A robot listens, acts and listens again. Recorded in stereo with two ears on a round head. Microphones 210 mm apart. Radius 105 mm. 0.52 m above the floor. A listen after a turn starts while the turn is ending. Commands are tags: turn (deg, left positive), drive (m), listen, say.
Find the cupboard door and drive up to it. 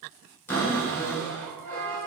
<turn deg="30"/>
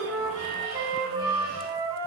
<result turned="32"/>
<listen/>
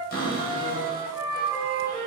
<turn deg="140"/>
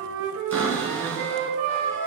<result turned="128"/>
<turn deg="10"/>
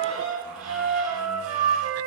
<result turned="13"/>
<drive m="1.0"/>
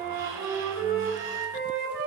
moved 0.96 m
<listen/>
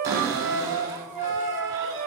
<turn deg="-15"/>
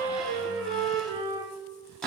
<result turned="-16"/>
<drive m="1.0"/>
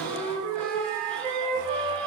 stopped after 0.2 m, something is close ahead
<say>Arrived at the cupboard door, straight ahead.</say>